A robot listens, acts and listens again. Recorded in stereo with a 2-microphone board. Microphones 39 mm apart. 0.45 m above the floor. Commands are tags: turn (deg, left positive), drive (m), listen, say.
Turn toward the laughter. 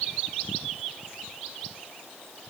<listen/>
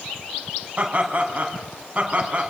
<turn deg="-30"/>
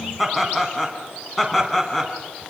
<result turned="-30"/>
<say>Found it: laughter, straight ahead.</say>